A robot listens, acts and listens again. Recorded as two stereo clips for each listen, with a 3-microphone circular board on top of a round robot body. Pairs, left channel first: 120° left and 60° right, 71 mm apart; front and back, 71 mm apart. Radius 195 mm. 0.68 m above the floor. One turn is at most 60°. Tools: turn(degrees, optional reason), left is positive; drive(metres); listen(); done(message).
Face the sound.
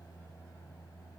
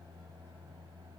listen()
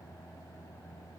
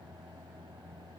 listen()
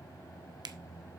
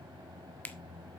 turn(degrees=-60, reason="The finger snap: 65° right.")
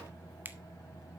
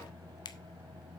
done("Found it: a finger snap, straight ahead, 1 to 2 m away.")